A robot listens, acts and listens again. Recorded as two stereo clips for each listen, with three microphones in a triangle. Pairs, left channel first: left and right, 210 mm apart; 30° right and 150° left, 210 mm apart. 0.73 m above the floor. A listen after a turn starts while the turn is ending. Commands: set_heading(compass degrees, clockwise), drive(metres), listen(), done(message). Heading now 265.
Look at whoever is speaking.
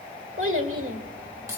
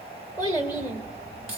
set_heading(5)
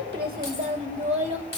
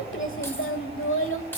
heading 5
set_heading(35)
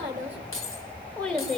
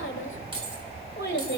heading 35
done("Facing the child speaking.")